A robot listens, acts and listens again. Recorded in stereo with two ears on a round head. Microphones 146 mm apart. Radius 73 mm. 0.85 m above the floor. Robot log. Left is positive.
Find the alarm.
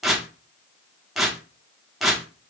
cmd idle
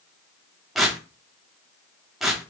cmd idle
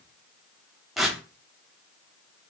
end: I can't make out an alarm, only tearing paper.